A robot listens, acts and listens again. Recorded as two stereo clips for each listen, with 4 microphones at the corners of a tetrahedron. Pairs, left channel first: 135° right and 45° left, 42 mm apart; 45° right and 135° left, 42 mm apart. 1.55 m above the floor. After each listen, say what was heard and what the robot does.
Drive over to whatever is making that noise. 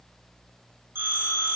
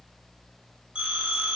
The phone ringing: 70° left. Turn 70° left.
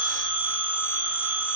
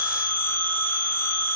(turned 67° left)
Drive 1.0 m forward.
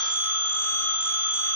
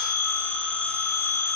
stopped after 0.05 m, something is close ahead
Blocked. The phone ringing is further on, straight ahead.